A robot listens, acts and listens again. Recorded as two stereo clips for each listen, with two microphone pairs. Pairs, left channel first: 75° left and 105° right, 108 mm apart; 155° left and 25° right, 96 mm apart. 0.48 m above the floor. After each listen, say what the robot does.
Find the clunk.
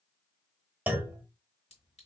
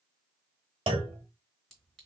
Turn 30° right.
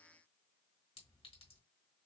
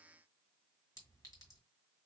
I heard a clunk from this way, but can't make it out now.